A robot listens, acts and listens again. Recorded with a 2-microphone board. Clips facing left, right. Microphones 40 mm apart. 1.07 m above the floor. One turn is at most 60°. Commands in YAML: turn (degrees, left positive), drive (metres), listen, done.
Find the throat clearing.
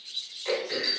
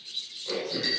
turn: 60
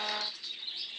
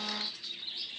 listen: true
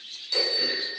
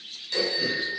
done: "Facing the throat clearing, over 4 m away."